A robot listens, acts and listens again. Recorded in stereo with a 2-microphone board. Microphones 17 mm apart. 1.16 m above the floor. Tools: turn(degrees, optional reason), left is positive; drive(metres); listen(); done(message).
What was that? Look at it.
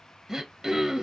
turn(degrees=-25, reason="The throat clearing: about 25° right or 155° right.")
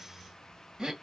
turn(degrees=-130, reason="So it is at 130° right.")
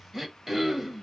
turn(degrees=-30, reason="The throat clearing is now 30° right.")
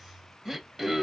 turn(degrees=-35, reason="The throat clearing is now 35° right.")
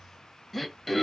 done("Found it: throat clearing, straight ahead, 1 to 2 m away.")